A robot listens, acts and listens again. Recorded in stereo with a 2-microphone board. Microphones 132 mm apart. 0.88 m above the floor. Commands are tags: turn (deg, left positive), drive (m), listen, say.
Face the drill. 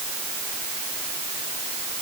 <listen/>
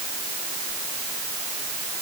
<listen/>
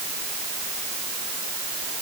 <say>I can't make out a drill.</say>